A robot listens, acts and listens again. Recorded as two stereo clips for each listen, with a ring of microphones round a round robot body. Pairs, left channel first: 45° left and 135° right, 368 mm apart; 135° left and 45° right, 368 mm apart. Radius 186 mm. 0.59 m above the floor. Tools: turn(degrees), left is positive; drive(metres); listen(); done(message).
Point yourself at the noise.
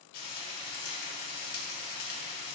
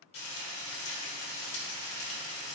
turn(degrees=80)
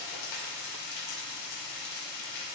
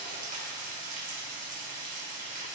turn(degrees=25)
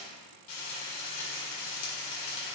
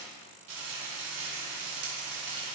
done("Facing the frying, 2 to 4 m away.")